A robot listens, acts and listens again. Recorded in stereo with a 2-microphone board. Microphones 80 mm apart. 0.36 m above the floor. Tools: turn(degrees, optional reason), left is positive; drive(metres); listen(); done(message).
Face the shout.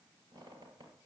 listen()
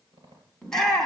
turn(degrees=30)
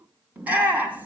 turn(degrees=-25, reason="So it is at 25° right.")
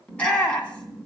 turn(degrees=15, reason="The shout is now 15° left.")
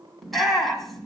done("Facing the shout.")